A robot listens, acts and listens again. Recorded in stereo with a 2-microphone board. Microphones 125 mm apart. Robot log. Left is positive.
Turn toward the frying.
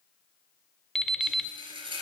note: The frying: about 45° right or 135° right.
cmd yaw -45
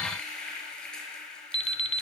end: Facing the frying, 2 to 4 m away.